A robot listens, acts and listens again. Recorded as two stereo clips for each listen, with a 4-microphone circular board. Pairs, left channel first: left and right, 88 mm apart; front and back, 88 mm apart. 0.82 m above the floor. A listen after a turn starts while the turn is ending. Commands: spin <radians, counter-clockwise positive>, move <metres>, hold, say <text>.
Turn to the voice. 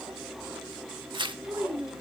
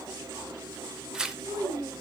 spin -2.97
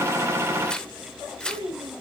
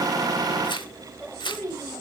spin -1.31
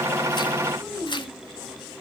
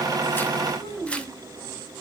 spin -0.35
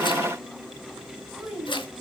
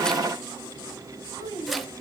say Facing the child speaking.